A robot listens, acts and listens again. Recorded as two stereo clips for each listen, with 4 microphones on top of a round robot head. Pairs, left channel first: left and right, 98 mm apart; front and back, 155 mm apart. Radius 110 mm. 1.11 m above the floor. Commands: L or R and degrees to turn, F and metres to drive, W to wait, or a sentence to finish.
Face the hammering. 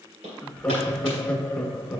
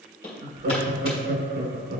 R65
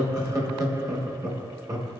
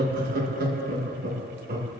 W
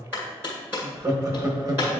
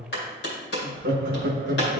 R15
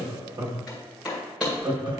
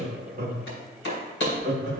Found it: hammering, straight ahead, 2 to 4 m away.